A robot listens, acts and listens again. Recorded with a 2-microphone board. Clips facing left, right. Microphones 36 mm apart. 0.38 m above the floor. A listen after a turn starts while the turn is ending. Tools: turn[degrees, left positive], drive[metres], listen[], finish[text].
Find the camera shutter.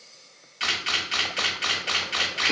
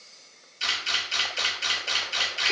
Thought: The camera shutter: about 55° left or 125° left.
Action: turn[55]
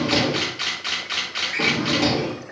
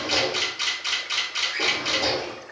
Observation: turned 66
Thought: So it is at 40° left.
Action: turn[40]
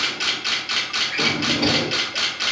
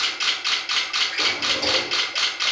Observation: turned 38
Action: finish[Facing the camera shutter, 1 to 2 m away.]